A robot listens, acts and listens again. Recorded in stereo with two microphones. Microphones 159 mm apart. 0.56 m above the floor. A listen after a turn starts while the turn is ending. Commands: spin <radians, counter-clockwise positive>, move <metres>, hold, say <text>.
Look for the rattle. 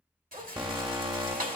spin -1.05
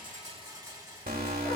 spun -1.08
spin -0.52
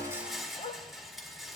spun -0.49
say Facing the rattle.